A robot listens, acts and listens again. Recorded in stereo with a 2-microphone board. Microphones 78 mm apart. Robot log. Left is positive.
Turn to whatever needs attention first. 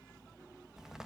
cmd idle
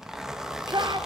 note: The shout: about 65° right or 115° right.
cmd yaw -65
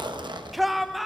end: Facing the shout, 1 to 2 m away.